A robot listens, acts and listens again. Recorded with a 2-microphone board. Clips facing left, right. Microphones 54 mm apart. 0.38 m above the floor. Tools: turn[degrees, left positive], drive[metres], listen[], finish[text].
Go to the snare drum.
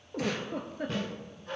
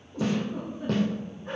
Thought: The snare drum: about 65° right or 115° right.
Action: turn[-65]
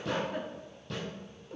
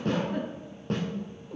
Thought: So it is at 45° right.
Action: turn[-45]
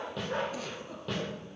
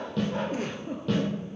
Action: drive[1.0]
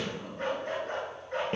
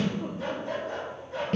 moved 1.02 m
Thought: The snare drum is now 25° left.
Action: turn[25]
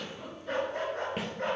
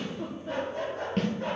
Thought: The snare drum is now 10° left.
Action: turn[10]
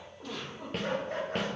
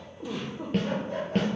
Action: drive[1.0]
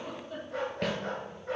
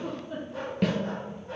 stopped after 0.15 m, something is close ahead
Action: finish[Arrived at the snare drum, straight ahead.]